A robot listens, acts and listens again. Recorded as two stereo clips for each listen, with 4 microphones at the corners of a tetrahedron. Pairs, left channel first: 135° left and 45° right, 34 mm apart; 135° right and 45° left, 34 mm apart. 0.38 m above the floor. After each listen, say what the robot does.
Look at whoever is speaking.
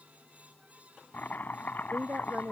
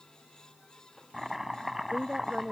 Turn 15° right.
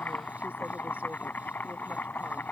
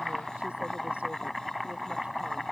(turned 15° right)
Keep listening.
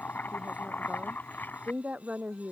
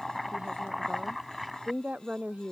Facing the woman speaking.